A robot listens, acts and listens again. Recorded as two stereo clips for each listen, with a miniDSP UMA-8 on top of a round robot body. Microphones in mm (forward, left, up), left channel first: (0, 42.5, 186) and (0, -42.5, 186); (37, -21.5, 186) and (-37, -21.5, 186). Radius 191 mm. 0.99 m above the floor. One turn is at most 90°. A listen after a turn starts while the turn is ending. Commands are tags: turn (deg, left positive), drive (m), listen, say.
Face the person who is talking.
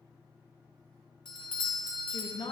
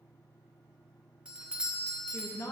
<turn deg="60"/>
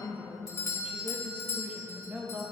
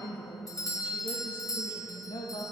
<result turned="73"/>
<turn deg="-15"/>
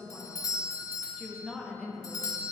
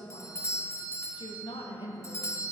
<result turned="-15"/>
<say>Facing the woman speaking, 1 to 2 m away.</say>